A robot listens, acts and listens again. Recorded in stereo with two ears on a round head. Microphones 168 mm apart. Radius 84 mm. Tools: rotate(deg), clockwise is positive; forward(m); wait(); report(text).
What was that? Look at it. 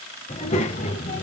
rotate(-40)
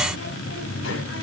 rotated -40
rotate(-100)
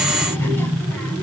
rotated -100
rotate(-10)
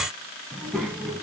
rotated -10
report("Facing the child speaking.")